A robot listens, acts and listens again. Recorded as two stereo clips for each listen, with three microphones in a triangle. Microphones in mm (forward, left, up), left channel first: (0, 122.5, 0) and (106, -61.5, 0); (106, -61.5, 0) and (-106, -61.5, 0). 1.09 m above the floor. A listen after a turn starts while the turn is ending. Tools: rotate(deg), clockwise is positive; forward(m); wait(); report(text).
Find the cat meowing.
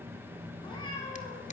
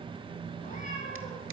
rotate(-50)
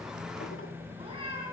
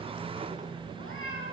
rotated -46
report("Found it: a cat meowing, straight ahead.")